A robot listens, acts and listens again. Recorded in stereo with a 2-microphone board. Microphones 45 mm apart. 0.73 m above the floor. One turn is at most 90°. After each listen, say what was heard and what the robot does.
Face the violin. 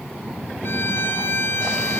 The violin: about 55° left or 125° left. Turn 55° left.
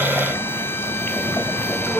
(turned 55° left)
Keep listening.
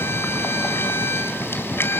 So it is at 70° left. Turn 70° left.
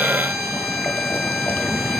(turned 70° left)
Facing the violin.